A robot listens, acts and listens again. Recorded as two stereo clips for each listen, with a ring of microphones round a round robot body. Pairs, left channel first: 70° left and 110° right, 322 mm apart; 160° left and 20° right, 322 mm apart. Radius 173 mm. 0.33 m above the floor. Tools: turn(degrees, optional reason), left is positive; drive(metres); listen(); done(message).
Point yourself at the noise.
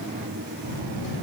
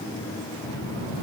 turn(degrees=-125, reason="The child speaking: 125° right.")
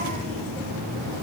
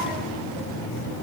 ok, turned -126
done("Found it: a child speaking, straight ahead.")